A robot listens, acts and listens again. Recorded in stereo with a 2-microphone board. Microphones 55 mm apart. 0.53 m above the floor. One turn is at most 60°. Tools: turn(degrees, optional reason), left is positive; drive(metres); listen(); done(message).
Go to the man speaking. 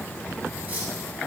listen()
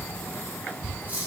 listen()
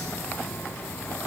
done("I can't make out a man speaking, only cutlery clinking.")